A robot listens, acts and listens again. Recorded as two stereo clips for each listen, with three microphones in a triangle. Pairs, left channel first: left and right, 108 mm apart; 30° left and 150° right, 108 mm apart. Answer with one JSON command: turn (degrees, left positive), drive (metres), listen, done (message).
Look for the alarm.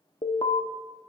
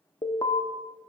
{"turn": 70}
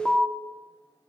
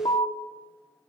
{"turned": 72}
{"done": "Facing the alarm, under 1 m away."}